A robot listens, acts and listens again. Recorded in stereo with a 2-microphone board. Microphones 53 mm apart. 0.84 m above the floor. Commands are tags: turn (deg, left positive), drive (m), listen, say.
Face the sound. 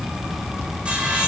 <turn deg="-20"/>
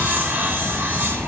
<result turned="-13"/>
<turn deg="-145"/>
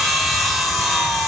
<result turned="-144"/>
<say>Found it: sawing, straight ahead.</say>